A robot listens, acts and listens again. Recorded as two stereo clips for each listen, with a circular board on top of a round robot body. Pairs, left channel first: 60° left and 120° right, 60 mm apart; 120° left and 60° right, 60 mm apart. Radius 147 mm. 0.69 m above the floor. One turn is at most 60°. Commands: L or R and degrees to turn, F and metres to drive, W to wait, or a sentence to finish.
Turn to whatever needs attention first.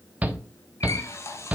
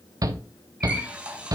R55
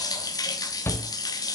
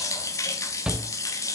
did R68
L15
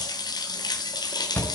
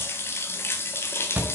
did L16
Found it: a shout, straight ahead.